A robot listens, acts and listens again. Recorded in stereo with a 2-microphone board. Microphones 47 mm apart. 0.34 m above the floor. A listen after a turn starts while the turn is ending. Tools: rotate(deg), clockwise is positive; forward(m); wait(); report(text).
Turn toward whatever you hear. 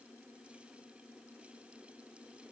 wait()
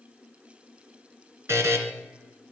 rotate(90)
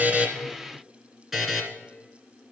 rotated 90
report("Facing the buzzer.")